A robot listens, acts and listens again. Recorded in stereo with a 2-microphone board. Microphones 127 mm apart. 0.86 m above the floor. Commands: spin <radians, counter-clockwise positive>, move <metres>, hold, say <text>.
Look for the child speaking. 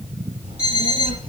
spin -1.57
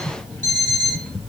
say Found it: a child speaking, straight ahead, 2 to 4 m away.